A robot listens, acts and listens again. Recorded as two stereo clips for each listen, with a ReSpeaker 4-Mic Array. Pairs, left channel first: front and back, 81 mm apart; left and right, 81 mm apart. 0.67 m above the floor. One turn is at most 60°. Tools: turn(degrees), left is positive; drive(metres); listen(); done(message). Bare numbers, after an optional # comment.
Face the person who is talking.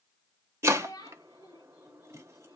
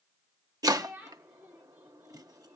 # The child speaking: 20° right.
turn(-20)
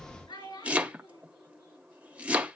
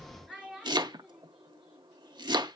done("Facing the child speaking, over 4 m away.")